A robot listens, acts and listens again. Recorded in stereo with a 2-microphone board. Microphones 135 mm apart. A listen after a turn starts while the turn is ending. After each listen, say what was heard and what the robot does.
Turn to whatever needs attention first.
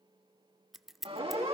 The siren: about 45° right or 135° right. Turn 45° right.
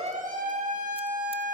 So it is at 90° right. Turn 90° right.
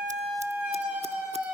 The siren is now 10° right. Turn 10° right.
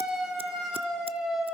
Found it: a siren, straight ahead, over 4 m away.